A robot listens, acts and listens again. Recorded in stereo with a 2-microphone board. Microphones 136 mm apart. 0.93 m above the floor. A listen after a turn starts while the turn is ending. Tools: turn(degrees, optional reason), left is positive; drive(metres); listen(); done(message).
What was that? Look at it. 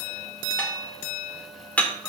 turn(degrees=30)
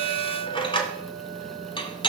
turn(degrees=140, reason="So it is at 140° left.")
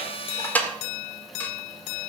turn(degrees=15, reason="The dishes clattering is now 15° left.")
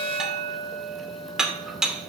done("Facing the dishes clattering.")